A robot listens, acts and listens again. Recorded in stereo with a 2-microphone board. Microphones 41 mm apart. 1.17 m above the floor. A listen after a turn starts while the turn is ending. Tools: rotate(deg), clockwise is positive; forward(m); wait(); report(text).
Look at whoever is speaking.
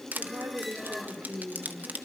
rotate(75)
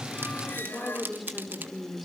report("Found it: a woman speaking, straight ahead, 2 to 4 m away.")